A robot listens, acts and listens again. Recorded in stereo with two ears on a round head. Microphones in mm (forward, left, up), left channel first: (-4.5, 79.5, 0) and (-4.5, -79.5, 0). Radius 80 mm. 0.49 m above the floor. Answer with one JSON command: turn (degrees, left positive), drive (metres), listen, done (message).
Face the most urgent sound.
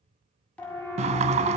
{"turn": 30}
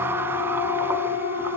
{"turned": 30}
{"turn": 145}
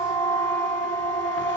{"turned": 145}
{"turn": 25}
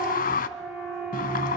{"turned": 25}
{"done": "Facing the siren."}